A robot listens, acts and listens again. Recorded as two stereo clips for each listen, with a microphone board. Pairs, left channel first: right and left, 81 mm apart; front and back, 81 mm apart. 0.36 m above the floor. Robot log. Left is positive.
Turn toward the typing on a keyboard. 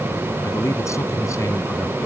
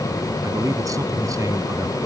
cmd idle
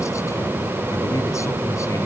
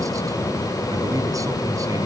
cmd idle
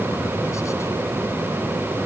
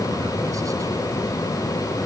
end: I can't make out typing on a keyboard to turn to.